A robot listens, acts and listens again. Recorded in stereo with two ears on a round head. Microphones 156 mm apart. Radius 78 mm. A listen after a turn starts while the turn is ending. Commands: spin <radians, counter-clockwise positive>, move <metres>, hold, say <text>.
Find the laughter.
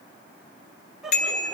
spin 0.52
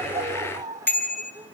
spin -0.52
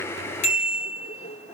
spin 0.61
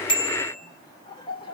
spin 0.52
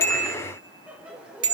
say Found it: laughter, straight ahead.